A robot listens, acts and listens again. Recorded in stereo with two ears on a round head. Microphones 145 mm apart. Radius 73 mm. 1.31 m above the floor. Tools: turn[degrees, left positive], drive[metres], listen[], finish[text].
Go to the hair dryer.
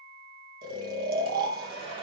Thought: The hair dryer: about 35° right or 145° right.
Action: turn[-35]
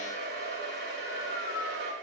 Thought: So it is at 110° right.
Action: turn[-110]
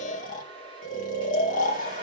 Thought: The hair dryer is now 30° right.
Action: turn[-30]
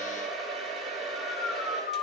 Action: drive[1.0]
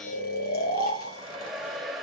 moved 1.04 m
Action: drive[1.0]
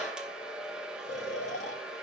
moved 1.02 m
Action: drive[1.0]
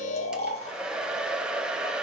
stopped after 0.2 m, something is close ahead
Action: finish[I am next to the hair dryer.]